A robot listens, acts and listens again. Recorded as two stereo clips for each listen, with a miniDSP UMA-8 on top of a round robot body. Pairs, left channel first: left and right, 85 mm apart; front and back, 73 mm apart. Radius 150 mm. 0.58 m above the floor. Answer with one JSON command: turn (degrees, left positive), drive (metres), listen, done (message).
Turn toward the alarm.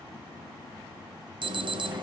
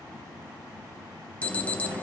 {"turn": -70}
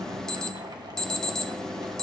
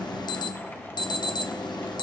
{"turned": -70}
{"turn": 10}
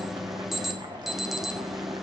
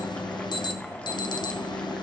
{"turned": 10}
{"done": "Facing the alarm, 1 to 2 m away."}